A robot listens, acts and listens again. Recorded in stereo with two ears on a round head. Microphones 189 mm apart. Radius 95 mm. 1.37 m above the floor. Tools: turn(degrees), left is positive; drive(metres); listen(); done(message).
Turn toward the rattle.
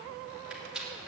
turn(degrees=-30)
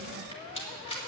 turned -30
turn(degrees=25)
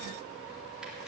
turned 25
done("Facing the rattle.")